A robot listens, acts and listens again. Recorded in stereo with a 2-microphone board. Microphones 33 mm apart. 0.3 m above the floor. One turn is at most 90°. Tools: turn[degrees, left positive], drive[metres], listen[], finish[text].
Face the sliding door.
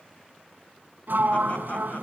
Thought: The sliding door: about 65° right or 115° right.
Action: turn[-65]
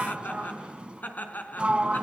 Thought: So it is at 35° right.
Action: turn[-35]
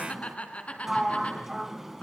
Thought: The sliding door is now 10° right.
Action: turn[-10]
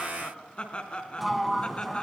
Action: finish[Facing the sliding door, 1 to 2 m away.]